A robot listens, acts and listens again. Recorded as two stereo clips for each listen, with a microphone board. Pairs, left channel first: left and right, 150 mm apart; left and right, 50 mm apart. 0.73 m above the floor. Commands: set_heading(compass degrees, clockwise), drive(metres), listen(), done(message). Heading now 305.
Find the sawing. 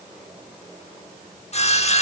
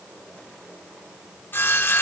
set_heading(260)
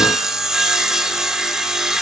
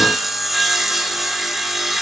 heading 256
done("Found it: sawing, straight ahead.")